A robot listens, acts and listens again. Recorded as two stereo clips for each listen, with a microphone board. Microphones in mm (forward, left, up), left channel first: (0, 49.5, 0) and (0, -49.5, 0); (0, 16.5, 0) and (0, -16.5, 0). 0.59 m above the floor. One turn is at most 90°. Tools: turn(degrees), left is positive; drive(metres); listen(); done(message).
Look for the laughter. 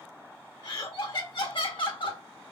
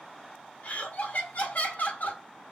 turn(degrees=55)
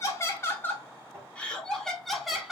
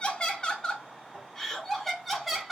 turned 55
done("Found it: laughter, straight ahead.")